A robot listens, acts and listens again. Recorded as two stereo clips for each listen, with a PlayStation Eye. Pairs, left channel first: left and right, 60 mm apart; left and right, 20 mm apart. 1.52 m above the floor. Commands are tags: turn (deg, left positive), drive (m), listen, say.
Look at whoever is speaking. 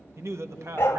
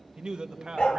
<turn deg="-45"/>
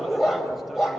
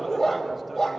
<listen/>
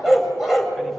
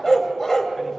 <listen/>
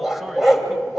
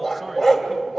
<say>I heard a man speaking, but can't make it out now. It was about straight ahead or 90° right.</say>